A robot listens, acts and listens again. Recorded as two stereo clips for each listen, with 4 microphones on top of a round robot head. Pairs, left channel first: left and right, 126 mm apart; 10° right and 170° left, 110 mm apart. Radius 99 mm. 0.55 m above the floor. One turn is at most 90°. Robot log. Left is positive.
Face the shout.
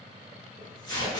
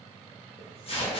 cmd idle
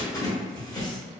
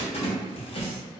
cmd idle
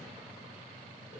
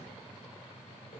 end: I can't make out a shout to turn to.